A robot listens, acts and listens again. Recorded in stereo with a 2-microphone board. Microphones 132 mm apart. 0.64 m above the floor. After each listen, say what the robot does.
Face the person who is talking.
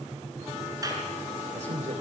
Turn 65° right.
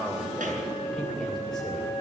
Facing the man speaking, 2 to 4 m away.